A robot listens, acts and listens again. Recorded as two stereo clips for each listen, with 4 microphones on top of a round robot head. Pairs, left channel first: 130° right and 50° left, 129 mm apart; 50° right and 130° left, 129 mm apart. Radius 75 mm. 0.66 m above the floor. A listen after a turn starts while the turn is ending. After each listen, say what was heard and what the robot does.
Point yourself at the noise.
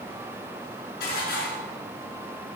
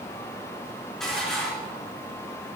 The dishes clattering: 135° right. Turn 135° right.
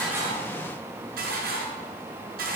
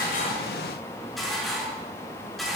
The dishes clattering is now 40° left. Turn 40° left.
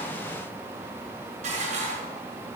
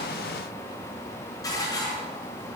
The dishes clattering is now 15° left. Turn 15° left.
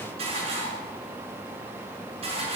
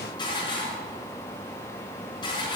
Found it: dishes clattering, straight ahead.